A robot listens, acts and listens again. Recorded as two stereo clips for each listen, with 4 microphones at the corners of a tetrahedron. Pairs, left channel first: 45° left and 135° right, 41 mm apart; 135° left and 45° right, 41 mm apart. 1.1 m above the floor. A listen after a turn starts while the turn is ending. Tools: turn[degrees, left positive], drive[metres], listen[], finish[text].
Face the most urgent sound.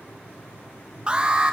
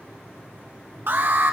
Thought: The alarm: 75° right.
Action: turn[-75]
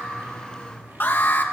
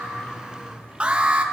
Thought: The alarm is now 15° left.
Action: turn[15]
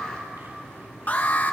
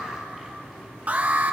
Action: finish[Found it: an alarm, straight ahead.]